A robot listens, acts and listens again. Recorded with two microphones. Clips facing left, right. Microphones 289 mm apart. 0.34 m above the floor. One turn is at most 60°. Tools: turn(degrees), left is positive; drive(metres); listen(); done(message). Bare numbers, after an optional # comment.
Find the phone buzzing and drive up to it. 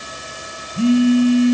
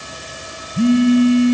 turn(30)
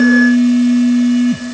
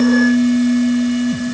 # So it is at 150° left.
turn(60)
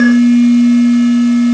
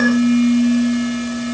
# The phone buzzing is now 90° left.
turn(60)
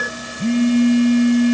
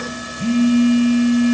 # The phone buzzing is now 25° left.
turn(25)
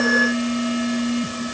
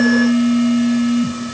drive(1.0)
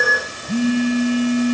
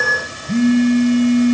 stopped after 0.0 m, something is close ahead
done("Something is in my way. I am facing the phone buzzing but have not reached it.")